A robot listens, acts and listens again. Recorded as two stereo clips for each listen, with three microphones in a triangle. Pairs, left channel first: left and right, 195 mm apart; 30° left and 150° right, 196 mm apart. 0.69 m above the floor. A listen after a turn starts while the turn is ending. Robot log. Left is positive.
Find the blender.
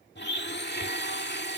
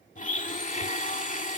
note: The blender: 75° left.
cmd yaw +75
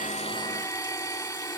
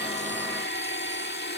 note: The blender is now 20° left.
cmd yaw +20
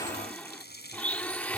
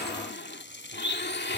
note: The blender is now 10° left.
cmd yaw +10
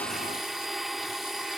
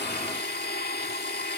end: Found it: a blender, straight ahead.